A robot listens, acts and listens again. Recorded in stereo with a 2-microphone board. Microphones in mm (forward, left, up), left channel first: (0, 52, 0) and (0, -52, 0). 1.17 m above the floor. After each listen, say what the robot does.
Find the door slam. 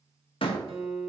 Turn 60° left.
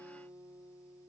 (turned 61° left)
Keep listening.
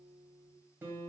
I heard a door slam, but can't make it out now. It was about straight ahead or 60° left.